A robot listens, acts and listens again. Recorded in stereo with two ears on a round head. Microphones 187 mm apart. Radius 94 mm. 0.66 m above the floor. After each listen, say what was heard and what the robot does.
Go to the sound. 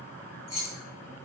The keys jangling: about 65° left or 115° left. Turn 65° left.
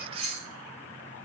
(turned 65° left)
Drive 1.0 m forward.
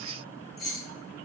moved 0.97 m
Drive 1.0 m forward.
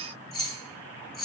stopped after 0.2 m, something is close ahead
I am next to the keys jangling.